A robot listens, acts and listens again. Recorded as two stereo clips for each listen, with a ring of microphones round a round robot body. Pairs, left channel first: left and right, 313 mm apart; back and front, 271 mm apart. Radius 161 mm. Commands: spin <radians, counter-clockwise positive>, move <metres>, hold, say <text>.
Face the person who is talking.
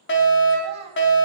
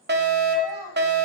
spin -0.52
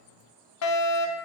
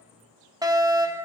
hold
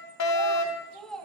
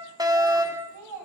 say Found it: a child speaking, straight ahead.